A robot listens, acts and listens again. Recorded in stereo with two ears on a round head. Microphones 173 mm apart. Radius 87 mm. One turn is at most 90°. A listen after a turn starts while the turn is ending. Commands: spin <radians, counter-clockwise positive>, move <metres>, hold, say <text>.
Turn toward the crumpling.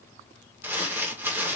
spin -0.52
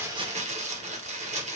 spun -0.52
spin -1.57
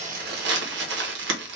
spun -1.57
spin -1.57
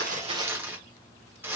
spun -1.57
spin -0.26
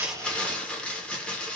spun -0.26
say Found it: crumpling, straight ahead.